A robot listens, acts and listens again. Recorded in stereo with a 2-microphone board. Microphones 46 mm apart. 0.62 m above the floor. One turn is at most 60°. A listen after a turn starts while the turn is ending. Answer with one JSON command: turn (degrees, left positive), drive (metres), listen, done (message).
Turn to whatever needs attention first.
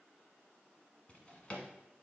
{"listen": true}
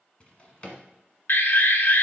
{"turn": 50}
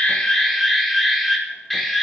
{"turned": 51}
{"done": "Found it: an alarm, straight ahead."}